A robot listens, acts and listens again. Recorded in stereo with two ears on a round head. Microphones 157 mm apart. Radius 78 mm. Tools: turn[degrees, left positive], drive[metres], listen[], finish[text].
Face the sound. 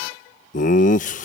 Thought: The laughter: about 45° left or 135° left.
Action: turn[45]
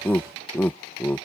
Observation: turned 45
Thought: So it is at 10° left.
Action: turn[10]
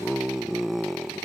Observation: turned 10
Action: finish[Facing the laughter.]